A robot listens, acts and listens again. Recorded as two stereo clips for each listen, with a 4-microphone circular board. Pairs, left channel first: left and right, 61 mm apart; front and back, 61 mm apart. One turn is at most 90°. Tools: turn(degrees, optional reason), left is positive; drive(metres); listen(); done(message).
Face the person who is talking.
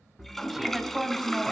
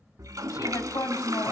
done("Facing the woman speaking.")